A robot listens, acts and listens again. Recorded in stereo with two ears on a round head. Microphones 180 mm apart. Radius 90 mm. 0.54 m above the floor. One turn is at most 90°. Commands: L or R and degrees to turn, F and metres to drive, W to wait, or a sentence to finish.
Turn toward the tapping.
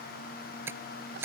R30
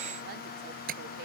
R90
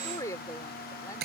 R50
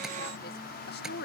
W
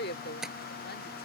Found it: tapping, straight ahead.